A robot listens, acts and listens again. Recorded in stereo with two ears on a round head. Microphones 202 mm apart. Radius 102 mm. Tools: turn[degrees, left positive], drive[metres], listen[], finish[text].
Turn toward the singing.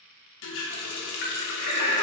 Thought: The singing: about 75° right or 105° right.
Action: turn[-75]
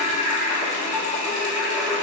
Action: finish[Found it: singing, straight ahead, under 1 m away.]